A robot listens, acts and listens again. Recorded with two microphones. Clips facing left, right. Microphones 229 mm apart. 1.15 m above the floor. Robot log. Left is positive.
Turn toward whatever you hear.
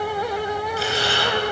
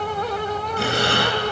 note: The breathing: about 60° right or 120° right.
cmd yaw -60
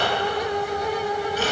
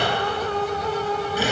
note: So it is at 10° right.
cmd yaw -10
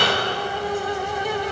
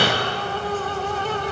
end: Facing the breathing, 2 to 4 m away.